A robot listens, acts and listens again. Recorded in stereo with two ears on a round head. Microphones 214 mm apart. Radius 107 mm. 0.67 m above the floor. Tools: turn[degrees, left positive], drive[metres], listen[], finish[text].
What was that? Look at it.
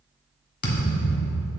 Thought: The thud: about 40° left or 140° left.
Action: turn[40]
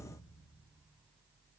Action: listen[]
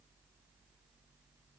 Action: finish[I heard a thud, but can't make it out now. It was about straight ahead or 100° left.]